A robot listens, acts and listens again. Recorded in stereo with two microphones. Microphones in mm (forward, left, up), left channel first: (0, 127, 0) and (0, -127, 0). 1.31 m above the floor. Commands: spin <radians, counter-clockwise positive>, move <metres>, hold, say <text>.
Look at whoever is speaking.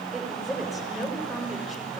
spin 0.52
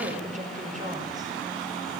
spin -0.52
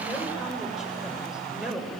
say Found it: a woman speaking, straight ahead.